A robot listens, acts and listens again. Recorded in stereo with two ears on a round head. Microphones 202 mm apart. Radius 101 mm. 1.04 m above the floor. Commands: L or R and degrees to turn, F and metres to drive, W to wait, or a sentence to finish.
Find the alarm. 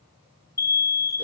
L15
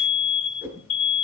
L150
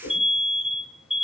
Facing the alarm, 2 to 4 m away.